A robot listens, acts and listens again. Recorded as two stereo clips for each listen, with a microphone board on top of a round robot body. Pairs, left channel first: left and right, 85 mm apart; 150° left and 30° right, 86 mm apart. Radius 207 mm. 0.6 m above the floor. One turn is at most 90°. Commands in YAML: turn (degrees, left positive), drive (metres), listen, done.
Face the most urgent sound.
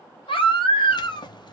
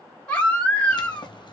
turn: 75
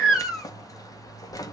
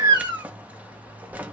done: "Facing the baby crying, 1 to 2 m away."